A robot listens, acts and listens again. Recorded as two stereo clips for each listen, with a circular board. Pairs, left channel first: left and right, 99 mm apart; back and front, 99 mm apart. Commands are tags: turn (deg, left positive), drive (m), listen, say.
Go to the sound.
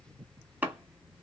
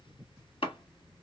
<turn deg="-165"/>
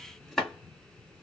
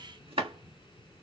<drive m="1.0"/>
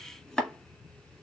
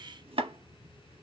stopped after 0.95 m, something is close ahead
<say>Arrived at the chopping, straight ahead.</say>